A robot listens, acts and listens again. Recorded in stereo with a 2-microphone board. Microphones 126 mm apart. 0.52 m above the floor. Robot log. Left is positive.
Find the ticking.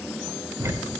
note: The ticking: about 20° right or 160° right.
cmd yaw -20
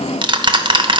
note: So it is at 140° right.
cmd yaw -140
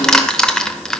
end: Facing the ticking, under 1 m away.